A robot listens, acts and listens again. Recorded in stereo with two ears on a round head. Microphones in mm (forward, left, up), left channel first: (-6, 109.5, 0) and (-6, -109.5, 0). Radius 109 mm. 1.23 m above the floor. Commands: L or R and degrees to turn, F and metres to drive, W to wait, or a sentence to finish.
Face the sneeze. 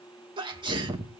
R20
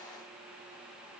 W
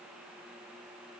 I heard a sneeze, but can't make it out now. It was about straight ahead or 140° right.